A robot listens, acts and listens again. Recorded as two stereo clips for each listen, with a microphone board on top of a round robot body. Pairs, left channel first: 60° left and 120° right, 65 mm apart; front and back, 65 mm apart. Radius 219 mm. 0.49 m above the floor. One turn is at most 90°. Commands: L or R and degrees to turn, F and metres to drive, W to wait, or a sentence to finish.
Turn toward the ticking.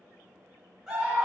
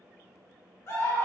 W
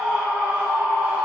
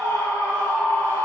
W
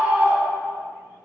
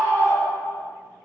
I can't make out ticking to turn to.